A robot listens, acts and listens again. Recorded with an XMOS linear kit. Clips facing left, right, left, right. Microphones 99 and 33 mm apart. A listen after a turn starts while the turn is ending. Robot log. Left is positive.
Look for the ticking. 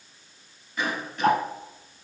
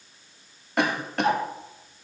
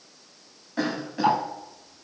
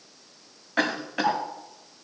note: The ticking: about 50° left or 130° left.
cmd yaw +50
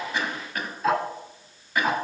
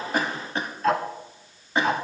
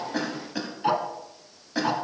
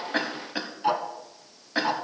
end: Facing the ticking, 1 to 2 m away.